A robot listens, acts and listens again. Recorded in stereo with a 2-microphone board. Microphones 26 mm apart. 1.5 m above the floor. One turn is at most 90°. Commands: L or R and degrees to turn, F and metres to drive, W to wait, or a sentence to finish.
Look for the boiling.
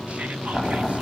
L30
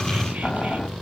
L90
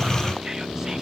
L45
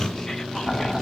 L30
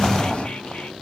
Facing the boiling.